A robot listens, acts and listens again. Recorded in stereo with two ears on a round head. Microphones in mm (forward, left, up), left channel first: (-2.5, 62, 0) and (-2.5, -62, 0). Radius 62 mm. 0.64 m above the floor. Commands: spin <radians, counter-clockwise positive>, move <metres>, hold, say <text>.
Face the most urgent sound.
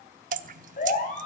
spin 0.96
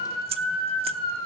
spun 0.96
say Facing the siren, over 4 m away.